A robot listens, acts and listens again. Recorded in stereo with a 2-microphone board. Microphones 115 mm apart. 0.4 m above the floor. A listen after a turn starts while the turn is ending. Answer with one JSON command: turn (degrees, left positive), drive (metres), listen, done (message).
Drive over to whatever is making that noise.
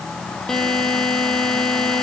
{"turn": 30}
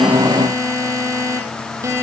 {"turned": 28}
{"turn": -25}
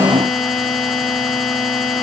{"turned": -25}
{"drive": 1.0}
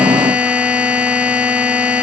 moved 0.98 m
{"turn": -10}
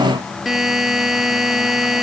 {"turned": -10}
{"drive": 1.0}
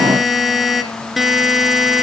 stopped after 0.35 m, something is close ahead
{"done": "I am next to the buzzer."}